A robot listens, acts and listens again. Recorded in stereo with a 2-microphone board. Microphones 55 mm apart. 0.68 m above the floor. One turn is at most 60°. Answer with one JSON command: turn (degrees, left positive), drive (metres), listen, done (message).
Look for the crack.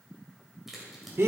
{"turn": -30}
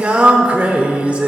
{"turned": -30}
{"listen": true}
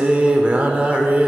{"done": "I heard a crack, but can't make it out now. It was about 25° left or 145° right."}